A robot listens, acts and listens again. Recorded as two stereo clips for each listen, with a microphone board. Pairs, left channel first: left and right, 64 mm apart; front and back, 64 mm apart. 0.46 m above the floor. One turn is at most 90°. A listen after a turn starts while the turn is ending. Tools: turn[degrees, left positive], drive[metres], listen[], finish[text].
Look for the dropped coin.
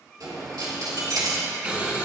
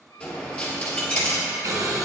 Thought: The dropped coin: 70° right.
Action: turn[-70]
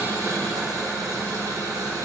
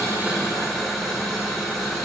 Action: finish[Facing where the dropped coin came from. I can't hear it now.]